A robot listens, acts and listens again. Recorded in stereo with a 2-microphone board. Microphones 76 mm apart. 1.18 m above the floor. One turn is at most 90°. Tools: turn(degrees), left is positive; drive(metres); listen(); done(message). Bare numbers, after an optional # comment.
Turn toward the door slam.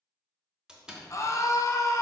turn(-30)
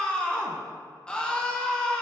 listen()
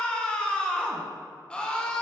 done("I heard a door slam, but can't make it out now. It was about 20° left or 140° right.")